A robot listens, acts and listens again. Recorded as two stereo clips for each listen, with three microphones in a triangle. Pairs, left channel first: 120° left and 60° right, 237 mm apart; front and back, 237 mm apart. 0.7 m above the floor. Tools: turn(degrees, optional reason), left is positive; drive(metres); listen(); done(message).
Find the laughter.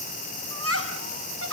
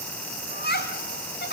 turn(degrees=-45, reason="The laughter: 45° right.")
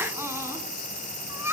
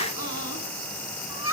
turn(degrees=20, reason="The laughter is now 20° left.")
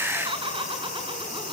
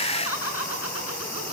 turn(degrees=10, reason="The laughter is now 10° left.")
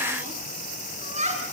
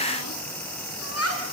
done("Facing the laughter.")